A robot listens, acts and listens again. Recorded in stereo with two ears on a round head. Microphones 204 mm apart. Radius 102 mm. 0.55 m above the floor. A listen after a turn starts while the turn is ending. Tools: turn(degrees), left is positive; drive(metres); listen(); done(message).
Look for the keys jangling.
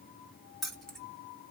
turn(degrees=30)
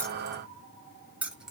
turn(degrees=-30)
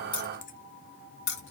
turn(degrees=50)
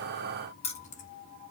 turn(degrees=30)
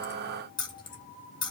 turn(degrees=20)
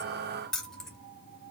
done("Facing the keys jangling, 1 to 2 m away.")